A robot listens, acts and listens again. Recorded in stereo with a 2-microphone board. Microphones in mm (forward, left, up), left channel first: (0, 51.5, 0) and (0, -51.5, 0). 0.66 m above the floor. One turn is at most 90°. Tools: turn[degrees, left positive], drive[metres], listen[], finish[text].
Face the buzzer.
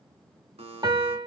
Thought: The buzzer: about 70° right or 110° right.
Action: turn[-70]
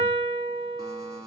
Thought: So it is at 35° right.
Action: turn[-35]
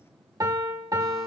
Action: listen[]
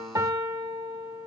Action: listen[]
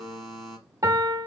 Action: finish[Facing the buzzer, 1 to 2 m away.]